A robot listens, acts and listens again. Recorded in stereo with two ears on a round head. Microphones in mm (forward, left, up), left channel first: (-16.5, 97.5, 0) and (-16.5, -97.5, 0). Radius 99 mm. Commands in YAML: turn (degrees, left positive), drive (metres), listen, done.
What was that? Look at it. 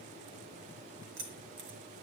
turn: -65
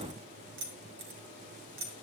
turn: -60
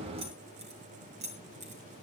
turn: -30
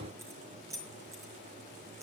turn: -15
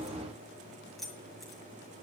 done: "Found it: keys jangling, straight ahead, over 4 m away."